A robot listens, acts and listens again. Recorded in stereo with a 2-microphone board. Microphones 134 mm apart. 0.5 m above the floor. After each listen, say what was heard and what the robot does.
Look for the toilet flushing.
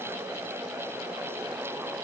Keep listening.
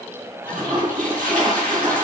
Turn 90° right.
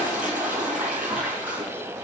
So it is at 10° right. Turn 10° right.
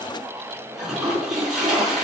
Facing the toilet flushing.